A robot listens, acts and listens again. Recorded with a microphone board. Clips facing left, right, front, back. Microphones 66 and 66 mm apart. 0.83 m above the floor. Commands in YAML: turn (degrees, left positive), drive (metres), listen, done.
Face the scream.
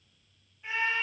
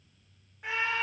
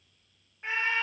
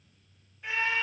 turn: -60
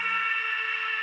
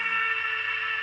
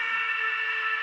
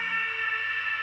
done: "Facing the scream, under 1 m away."